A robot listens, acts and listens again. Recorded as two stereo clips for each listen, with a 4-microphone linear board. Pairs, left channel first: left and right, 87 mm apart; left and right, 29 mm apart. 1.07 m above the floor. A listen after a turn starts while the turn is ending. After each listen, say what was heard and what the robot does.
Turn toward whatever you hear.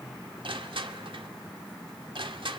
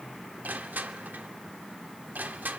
Turn 90° right.
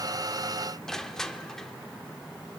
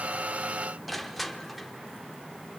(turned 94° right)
Facing the crushing.